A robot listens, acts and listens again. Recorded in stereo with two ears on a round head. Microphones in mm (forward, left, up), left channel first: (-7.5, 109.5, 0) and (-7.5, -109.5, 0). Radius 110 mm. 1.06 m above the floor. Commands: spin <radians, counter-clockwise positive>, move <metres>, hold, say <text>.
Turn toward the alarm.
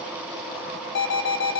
spin 0.87
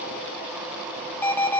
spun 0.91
spin 0.17
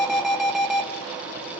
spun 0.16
say Facing the alarm, 1 to 2 m away.